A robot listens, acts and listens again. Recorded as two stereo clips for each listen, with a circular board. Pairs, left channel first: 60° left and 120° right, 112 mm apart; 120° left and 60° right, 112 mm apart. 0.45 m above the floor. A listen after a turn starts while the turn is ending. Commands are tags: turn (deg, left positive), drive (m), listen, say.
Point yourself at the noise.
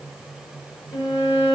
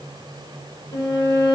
<turn deg="100"/>
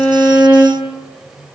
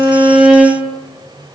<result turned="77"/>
<turn deg="25"/>
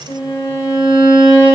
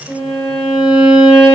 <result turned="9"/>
<turn deg="15"/>
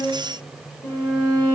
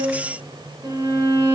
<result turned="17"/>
<say>Facing the violin, under 1 m away.</say>